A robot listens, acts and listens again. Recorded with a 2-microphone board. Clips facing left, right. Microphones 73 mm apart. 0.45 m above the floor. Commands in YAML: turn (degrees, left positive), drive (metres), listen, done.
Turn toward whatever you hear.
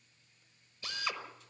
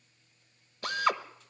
turn: -55
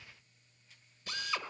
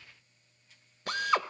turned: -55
turn: -65
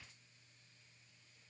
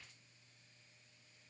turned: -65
listen: true
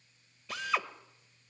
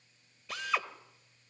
done: "Facing the drill."